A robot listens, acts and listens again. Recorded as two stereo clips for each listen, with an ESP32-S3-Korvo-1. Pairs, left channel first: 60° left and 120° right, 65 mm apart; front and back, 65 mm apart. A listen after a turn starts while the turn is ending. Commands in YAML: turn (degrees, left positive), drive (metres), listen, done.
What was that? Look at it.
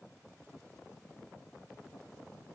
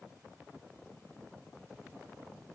listen: true
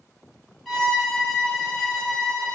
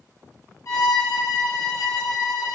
turn: -30
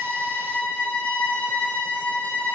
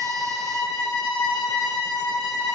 done: "Facing the violin, 1 to 2 m away."